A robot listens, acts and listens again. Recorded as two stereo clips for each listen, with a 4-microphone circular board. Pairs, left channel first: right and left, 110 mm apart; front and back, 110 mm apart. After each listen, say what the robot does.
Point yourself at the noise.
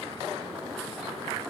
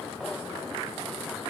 Keep listening.
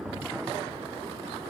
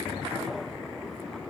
Keep listening.
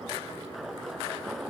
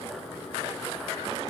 I can't make out anything.